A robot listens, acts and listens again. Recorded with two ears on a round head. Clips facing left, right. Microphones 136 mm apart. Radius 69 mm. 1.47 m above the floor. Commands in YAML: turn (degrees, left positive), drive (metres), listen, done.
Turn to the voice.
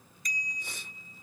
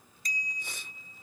listen: true
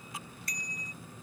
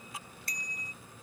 listen: true
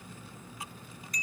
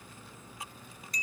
done: "I can't make out anyone speaking to turn to."